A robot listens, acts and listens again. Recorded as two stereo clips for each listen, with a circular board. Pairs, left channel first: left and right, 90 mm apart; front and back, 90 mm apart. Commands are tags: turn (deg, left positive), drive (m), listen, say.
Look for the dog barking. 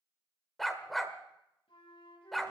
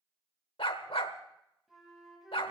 <say>Found it: a dog barking, straight ahead, 1 to 2 m away.</say>